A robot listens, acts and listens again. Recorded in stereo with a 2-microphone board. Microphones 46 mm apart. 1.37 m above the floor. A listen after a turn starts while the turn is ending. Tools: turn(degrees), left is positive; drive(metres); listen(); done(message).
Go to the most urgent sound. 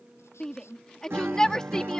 turn(degrees=30)
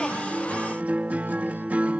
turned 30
listen()
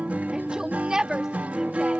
turn(degrees=-20)
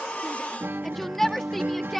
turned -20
drive(metres=1.0)
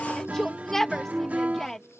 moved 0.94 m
turn(degrees=10)
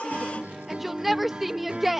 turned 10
drive(metres=1.0)
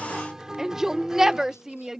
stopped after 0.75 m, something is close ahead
turn(degrees=-10)
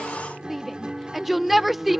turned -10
done("I am next to the shout.")